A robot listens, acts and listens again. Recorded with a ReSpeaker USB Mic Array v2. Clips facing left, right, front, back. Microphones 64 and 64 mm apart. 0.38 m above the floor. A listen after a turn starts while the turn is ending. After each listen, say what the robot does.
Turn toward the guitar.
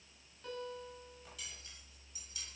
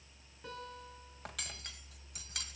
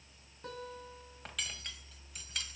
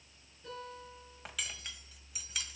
Turn 10° right.
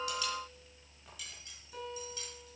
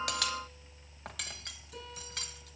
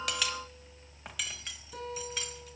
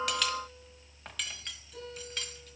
Facing the guitar.